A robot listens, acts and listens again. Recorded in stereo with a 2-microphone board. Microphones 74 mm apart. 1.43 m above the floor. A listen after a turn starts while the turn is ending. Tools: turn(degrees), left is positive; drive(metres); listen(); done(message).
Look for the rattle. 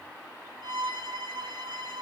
listen()
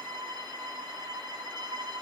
listen()
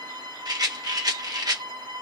turn(degrees=-65)
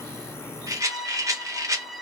turn(degrees=-50)
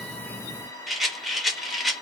done("Facing the rattle, under 1 m away.")